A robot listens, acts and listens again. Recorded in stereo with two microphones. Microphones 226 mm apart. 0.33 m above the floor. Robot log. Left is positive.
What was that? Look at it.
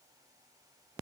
cmd idle
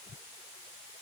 cmd idle
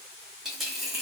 cmd yaw +30
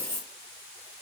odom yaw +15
note: So it is at 165° left.
cmd yaw +165
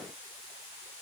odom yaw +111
note: Nothing new. It was at 55° left.
cmd yaw +55
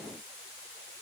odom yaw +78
note: Nothing new. It was at 20° right.
cmd yaw -20
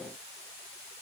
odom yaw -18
end: Facing where the dropped coin came from. I can't hear it now.